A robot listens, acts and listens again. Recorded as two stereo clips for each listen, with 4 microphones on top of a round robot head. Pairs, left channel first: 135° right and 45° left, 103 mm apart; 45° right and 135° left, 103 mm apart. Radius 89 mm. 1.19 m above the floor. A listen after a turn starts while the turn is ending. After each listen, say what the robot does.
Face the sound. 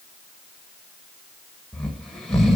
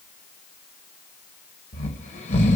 Turn 45° right.
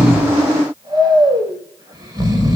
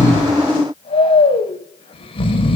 Turn 10° right.
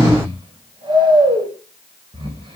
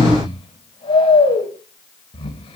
Found it: snoring, straight ahead, over 4 m away.